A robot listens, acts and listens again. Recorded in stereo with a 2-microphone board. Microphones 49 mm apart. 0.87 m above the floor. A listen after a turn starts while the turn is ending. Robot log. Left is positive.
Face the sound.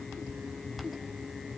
cmd idle
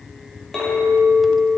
cmd yaw +30
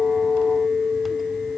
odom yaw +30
note: So it is at 15° right.
cmd yaw -15
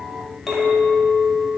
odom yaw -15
end: Found it: a clink, straight ahead, 2 to 4 m away.